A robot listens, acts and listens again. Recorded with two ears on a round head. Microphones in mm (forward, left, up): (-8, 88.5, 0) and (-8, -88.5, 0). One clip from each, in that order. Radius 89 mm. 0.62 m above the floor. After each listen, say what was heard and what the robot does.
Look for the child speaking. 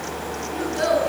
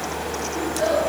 The child speaking: about 50° left or 130° left. Turn 50° left.
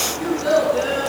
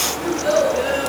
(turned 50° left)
Facing the child speaking.